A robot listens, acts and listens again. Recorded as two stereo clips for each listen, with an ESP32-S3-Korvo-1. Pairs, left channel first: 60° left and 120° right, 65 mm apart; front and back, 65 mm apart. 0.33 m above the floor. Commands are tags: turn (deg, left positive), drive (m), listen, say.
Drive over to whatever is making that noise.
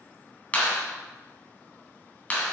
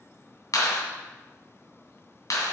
<drive m="1.0"/>
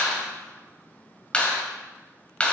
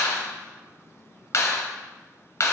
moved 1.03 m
<drive m="1.0"/>
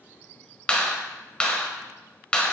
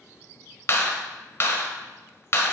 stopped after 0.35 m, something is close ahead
<turn deg="-10"/>
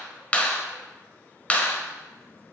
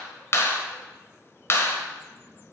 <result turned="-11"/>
<say>I am next to the clap.</say>